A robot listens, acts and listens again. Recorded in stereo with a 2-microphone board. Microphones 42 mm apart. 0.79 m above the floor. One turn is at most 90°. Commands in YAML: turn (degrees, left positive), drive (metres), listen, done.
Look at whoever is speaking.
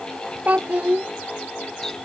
turn: -45
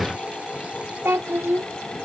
turn: -90
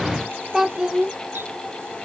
turn: -10
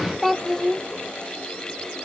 done: "Facing the child speaking."